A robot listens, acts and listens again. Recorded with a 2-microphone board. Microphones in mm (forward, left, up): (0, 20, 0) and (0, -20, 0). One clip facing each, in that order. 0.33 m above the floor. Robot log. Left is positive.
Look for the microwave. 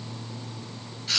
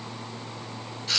cmd idle
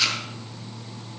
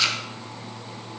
cmd idle
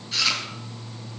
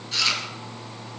end: I can't make out a microwave to turn to.